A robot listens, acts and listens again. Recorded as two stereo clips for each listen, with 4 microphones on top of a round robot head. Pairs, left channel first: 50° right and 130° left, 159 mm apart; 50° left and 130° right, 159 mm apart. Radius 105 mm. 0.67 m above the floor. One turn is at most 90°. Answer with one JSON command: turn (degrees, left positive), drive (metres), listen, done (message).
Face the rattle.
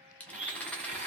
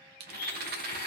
{"turn": -90}
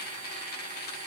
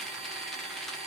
{"turn": -40}
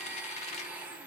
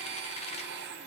{"listen": true}
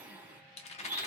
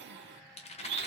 {"done": "Facing the rattle."}